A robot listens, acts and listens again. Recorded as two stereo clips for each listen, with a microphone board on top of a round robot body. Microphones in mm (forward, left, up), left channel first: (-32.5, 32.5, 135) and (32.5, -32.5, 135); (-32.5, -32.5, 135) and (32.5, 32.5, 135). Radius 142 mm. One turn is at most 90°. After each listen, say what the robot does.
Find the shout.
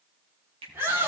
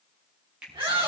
Turn 20° left.
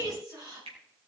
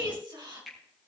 Found it: a shout, straight ahead.